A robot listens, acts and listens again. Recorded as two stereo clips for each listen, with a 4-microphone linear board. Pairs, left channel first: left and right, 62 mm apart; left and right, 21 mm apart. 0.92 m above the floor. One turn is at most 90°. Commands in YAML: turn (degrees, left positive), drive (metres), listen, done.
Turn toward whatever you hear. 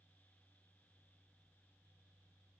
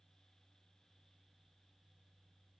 listen: true
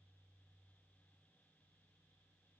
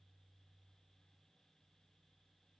listen: true
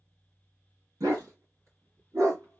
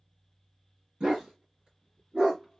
turn: -50
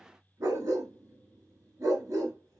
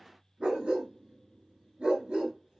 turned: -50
turn: -65
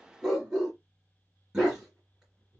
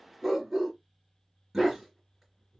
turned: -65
turn: -10
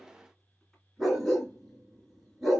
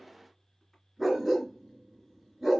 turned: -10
done: "Facing the dog barking."